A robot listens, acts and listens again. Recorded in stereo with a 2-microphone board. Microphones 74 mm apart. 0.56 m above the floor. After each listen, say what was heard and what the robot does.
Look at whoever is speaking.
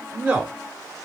The man speaking: about 20° right or 160° right. Turn 20° right.
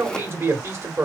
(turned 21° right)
So it is at 135° right. Turn 135° right.
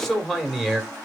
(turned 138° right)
Found it: a man speaking, straight ahead.